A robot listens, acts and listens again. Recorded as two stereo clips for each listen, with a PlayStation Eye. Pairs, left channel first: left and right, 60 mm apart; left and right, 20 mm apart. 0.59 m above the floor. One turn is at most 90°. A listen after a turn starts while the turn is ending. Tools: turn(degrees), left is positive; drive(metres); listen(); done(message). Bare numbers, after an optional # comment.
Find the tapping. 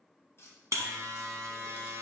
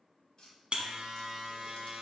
# The tapping: about 40° left or 140° left.
turn(40)
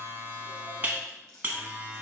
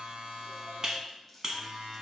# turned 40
listen()
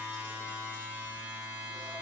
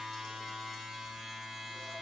listen()
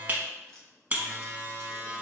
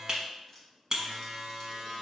done("I heard tapping, but can't make it out now. It was about straight ahead or 100° left.")